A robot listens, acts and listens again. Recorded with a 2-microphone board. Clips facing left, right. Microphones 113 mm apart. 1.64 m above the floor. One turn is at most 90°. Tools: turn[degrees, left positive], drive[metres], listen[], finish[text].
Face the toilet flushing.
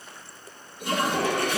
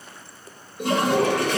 Action: turn[-90]
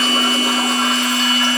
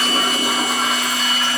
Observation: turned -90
Action: listen[]
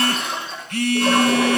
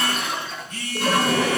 Action: finish[Found it: a toilet flushing, straight ahead.]